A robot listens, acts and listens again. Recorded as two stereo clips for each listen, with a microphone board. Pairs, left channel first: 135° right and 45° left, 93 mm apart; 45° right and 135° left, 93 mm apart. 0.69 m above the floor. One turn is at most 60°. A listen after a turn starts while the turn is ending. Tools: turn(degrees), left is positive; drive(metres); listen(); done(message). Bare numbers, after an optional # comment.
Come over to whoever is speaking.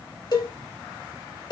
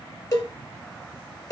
listen()
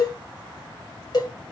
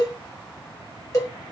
listen()
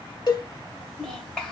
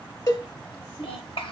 # The child speaking: 55° right.
turn(-55)
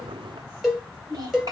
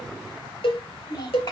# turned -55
drive(1.0)
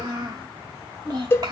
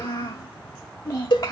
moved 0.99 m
drive(1.0)
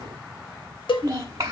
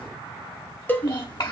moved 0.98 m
drive(1.0)
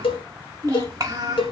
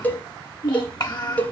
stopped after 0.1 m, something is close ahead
done("I am next to the child speaking.")